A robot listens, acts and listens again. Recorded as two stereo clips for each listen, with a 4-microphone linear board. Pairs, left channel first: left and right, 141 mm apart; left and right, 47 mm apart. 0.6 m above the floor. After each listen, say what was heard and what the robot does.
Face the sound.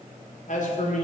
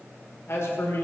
The man speaking: about 60° left or 120° left. Turn 60° left.
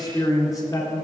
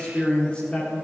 So it is at 20° left. Turn 20° left.
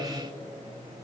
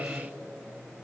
Keep listening.
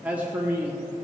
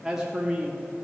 The man speaking is now 20° right. Turn 20° right.
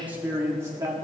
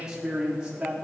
The man speaking is now 25° right. Turn 25° right.
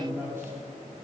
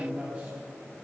The man speaking is now 20° right. Turn 20° right.
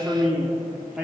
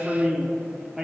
The man speaking is now 10° right. Turn 10° right.
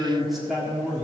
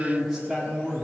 Facing the man speaking, 1 to 2 m away.